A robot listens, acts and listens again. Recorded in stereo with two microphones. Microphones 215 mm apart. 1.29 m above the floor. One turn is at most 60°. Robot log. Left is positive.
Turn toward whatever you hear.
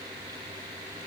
cmd idle
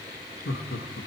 note: The laughter: about 70° left or 110° left.
cmd yaw +60
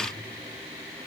cmd idle
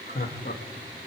note: So it is at 45° left.
cmd yaw +45
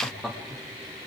end: Found it: laughter, straight ahead, 1 to 2 m away.